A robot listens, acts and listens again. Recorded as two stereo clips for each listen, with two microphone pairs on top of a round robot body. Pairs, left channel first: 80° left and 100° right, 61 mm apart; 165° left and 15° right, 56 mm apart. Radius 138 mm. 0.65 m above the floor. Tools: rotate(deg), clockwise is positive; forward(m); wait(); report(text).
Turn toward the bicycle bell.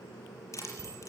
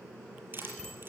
rotate(110)
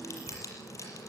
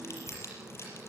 wait()
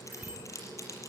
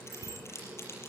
rotate(30)
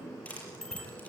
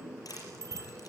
report("Found it: a bicycle bell, straight ahead.")